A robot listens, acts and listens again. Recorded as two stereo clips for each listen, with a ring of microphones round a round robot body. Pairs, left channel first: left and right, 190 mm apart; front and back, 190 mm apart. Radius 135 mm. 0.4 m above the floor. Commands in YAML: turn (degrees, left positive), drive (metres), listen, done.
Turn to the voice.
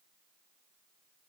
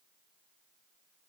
listen: true
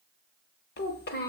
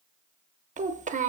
turn: 130
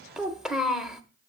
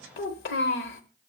done: "Facing the child speaking, under 1 m away."